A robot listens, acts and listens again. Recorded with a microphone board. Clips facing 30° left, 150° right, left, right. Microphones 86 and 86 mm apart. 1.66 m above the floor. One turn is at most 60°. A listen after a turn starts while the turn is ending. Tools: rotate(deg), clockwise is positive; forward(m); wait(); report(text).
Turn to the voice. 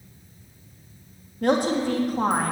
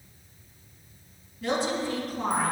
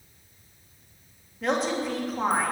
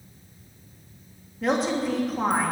report("Facing the woman speaking.")